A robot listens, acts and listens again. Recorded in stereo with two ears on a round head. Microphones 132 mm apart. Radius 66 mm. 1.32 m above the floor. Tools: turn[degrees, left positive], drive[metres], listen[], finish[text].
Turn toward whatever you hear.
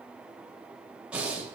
Action: turn[-30]
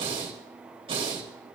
Thought: So it is at 140° right.
Action: turn[-140]
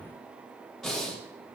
Action: finish[Found it: breathing, straight ahead.]